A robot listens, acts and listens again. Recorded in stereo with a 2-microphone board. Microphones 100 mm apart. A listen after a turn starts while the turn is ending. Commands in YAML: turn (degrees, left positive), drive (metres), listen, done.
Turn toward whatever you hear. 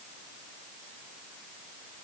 listen: true
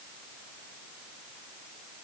listen: true
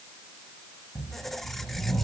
turn: 30
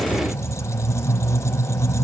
turn: 145
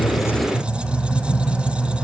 turn: -10
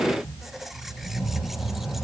done: "Facing the squeak."